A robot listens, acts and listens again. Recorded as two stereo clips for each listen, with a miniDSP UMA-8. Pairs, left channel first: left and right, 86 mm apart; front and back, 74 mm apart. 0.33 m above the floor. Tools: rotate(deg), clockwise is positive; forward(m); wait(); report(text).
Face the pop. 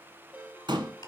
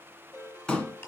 rotate(80)
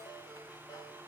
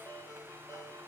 report("Facing where the pop came from. I can't hear it now.")